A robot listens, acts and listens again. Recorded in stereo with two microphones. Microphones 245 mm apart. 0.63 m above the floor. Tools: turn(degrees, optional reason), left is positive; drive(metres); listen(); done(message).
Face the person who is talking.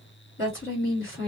turn(degrees=55, reason="The woman speaking: about 55° left or 125° left.")
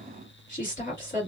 turn(degrees=50, reason="So it is at 50° left.")
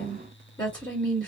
turn(degrees=10, reason="The woman speaking is now 10° left.")
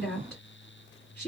done("Found it: a woman speaking, straight ahead, 1 to 2 m away.")